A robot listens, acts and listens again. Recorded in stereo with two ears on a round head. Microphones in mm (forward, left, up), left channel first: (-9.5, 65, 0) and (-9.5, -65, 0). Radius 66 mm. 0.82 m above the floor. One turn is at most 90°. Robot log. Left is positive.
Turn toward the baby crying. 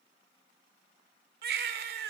cmd yaw -90
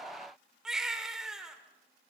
end: Facing the baby crying.